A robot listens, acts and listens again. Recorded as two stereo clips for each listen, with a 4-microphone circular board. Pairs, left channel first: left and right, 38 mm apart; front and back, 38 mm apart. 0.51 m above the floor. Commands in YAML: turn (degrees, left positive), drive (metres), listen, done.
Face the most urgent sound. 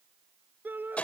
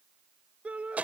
turn: -125
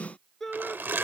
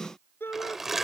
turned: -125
done: "Facing the shout."